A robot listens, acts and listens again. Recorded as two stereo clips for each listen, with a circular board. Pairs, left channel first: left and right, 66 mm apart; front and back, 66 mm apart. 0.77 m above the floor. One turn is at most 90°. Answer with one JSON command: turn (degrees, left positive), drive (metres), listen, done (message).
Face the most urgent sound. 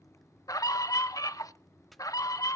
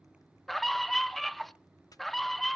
{"turn": 85}
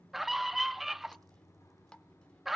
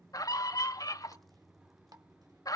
{"done": "Facing the scream."}